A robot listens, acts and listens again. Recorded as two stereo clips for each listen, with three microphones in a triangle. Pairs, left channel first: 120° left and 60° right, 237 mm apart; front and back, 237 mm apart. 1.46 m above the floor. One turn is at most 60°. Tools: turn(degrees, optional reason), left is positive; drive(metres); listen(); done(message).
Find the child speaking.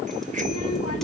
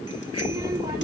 turn(degrees=60, reason="The child speaking: 110° left.")
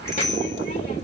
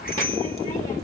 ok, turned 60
turn(degrees=60, reason="The child speaking is now 60° left.")
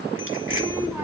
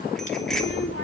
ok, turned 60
turn(degrees=20, reason="The child speaking is now 20° left.")
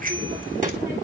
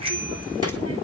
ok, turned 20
listen()
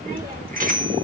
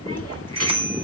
done("Facing the child speaking.")